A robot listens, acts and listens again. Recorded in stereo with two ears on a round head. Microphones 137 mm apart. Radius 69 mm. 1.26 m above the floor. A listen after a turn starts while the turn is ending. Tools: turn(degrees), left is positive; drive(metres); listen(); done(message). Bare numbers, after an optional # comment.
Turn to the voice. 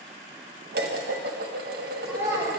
turn(-30)
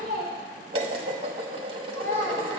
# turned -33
# So it is at 20° left.
turn(20)
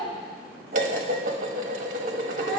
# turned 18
listen()
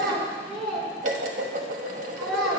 done("Found it: a child speaking, straight ahead.")